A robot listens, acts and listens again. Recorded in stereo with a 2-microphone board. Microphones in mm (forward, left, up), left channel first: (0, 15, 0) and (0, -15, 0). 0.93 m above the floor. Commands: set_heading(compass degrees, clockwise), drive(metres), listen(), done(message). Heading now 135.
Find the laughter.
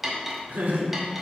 set_heading(225)
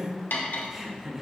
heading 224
set_heading(239)
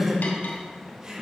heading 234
set_heading(259)
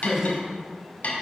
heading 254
set_heading(274)
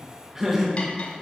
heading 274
set_heading(289)
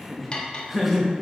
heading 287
done("Found it: laughter, straight ahead.")